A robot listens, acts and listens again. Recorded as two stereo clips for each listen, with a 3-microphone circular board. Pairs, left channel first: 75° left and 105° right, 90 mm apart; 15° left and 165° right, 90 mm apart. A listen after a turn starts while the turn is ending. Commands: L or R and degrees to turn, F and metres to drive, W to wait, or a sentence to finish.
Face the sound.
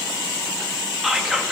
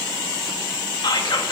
R20
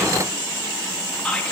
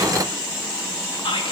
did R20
Facing the whispering.